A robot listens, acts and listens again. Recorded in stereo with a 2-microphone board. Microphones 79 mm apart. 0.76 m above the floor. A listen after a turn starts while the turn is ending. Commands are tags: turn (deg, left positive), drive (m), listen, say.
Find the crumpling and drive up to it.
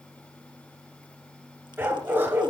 <listen/>
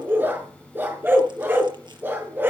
<listen/>
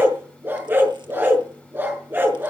<say>I can't make out crumpling to turn to.</say>